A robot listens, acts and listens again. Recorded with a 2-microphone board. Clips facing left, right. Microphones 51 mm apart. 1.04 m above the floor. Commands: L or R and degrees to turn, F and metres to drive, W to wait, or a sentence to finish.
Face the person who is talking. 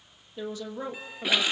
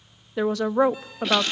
R70
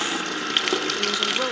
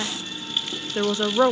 R35
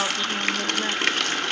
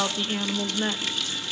Found it: a woman speaking, straight ahead.